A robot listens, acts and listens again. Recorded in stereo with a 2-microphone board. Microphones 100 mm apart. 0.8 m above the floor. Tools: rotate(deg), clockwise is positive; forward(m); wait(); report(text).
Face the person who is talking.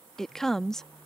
rotate(-30)
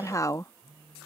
rotate(-145)
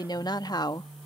rotate(-50)
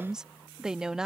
report("Facing the woman speaking.")